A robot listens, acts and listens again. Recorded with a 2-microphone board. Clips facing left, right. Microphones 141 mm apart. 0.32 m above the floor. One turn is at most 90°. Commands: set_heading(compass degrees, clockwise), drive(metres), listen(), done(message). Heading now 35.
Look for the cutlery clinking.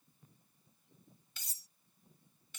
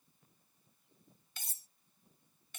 set_heading(85)
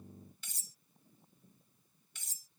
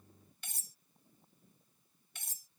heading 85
set_heading(155)
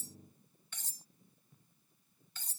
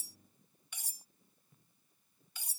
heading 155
set_heading(170)
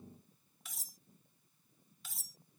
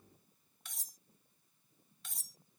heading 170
done("Facing the cutlery clinking.")